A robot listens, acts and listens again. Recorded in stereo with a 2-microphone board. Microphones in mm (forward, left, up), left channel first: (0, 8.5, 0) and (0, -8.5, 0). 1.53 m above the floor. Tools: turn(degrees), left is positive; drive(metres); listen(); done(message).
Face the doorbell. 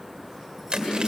listen()
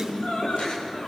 listen()
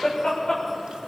done("I can't make out a doorbell, only laughter.")